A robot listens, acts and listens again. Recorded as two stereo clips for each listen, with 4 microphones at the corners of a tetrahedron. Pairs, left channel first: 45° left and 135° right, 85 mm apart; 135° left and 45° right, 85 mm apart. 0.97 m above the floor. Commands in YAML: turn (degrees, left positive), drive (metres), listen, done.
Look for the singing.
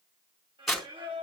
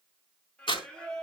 turn: -145
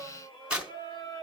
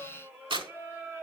turn: 20
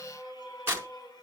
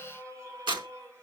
turn: 10
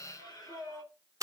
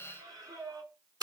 done: "Found it: singing, straight ahead, 2 to 4 m away."